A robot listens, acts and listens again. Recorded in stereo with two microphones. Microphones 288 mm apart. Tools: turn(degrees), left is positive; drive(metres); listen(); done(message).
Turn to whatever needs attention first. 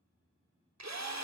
listen()
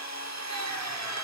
listen()
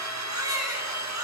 turn(degrees=-30)
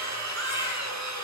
turn(degrees=-135)
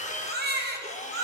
turn(degrees=-35)
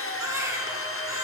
turn(degrees=-10)
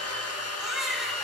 done("Facing the baby crying, 1 to 2 m away.")